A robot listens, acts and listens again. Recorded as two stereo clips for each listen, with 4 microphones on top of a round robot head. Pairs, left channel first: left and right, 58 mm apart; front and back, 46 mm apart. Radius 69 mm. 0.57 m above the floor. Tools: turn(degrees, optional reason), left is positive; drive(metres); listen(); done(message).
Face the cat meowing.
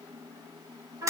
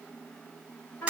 listen()
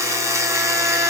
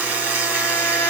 listen()
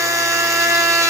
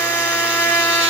done("I can't make out a cat meowing to turn to.")